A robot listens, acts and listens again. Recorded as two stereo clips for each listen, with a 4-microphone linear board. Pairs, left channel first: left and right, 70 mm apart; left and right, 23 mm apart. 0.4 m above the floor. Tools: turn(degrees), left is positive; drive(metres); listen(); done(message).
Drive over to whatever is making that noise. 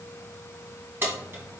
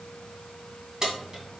turn(degrees=-35)
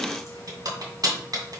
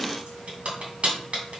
turn(degrees=-110)
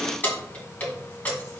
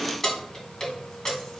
turn(degrees=25)
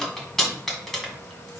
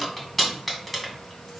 drive(metres=1.0)
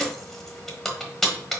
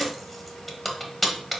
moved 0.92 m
drive(metres=1.0)
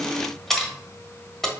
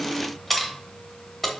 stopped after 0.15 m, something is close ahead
done("Arrived at the keys jangling, straight ahead.")